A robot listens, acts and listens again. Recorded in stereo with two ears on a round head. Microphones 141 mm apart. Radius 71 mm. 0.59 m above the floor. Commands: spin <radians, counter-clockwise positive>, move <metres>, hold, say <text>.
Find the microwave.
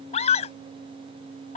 hold
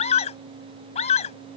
hold
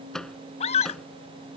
spin 0.52
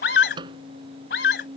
spin -0.52
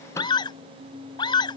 hold
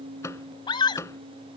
spin 0.35
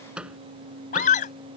say Found it: a microwave, straight ahead.